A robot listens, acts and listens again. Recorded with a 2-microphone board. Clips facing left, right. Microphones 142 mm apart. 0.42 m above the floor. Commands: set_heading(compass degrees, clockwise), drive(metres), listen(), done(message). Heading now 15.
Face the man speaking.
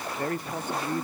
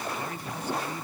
set_heading(325)
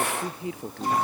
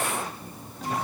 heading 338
set_heading(238)
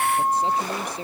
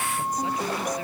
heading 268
set_heading(238)
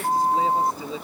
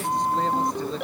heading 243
done("Facing the man speaking.")